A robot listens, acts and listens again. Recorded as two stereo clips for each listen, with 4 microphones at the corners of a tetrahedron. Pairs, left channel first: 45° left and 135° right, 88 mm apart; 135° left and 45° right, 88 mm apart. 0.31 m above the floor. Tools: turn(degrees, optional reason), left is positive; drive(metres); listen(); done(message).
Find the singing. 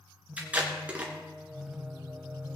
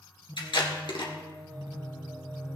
turn(degrees=-60, reason="The singing: 60° right.")
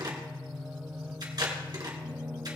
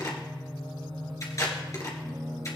turn(degrees=-70, reason="The singing is now 70° right.")
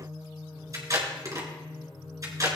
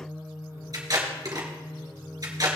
done("Found it: singing, straight ahead, 2 to 4 m away.")